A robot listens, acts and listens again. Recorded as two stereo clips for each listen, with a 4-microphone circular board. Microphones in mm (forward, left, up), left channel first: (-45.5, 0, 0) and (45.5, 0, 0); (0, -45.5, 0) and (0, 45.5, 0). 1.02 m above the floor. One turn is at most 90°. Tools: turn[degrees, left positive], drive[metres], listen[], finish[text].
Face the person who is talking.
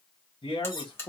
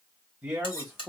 Thought: The man speaking: straight behind.
Action: turn[90]
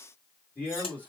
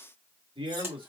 Thought: The man speaking is now 110° left.
Action: turn[90]
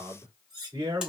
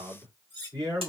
Thought: The man speaking is now 45° left.
Action: turn[45]
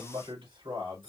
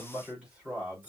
Thought: The man speaking is now 15° left.
Action: turn[15]
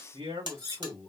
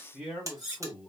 Action: finish[Facing the man speaking.]